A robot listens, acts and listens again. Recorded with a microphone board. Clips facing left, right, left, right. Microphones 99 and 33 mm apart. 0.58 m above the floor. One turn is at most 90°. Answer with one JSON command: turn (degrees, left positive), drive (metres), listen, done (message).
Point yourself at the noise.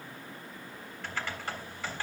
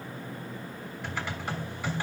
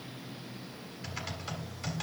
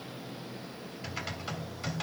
{"turn": -30}
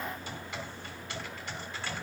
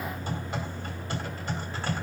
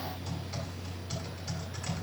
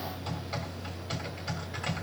{"turn": -90}
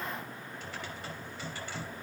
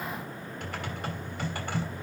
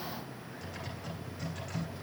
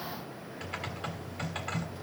{"turn": -60}
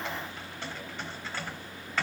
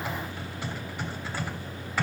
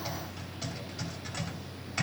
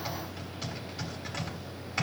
{"turn": -10}
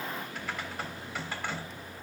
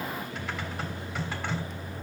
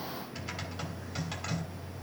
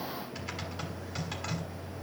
{"done": "Found it: typing on a keyboard, straight ahead, 2 to 4 m away."}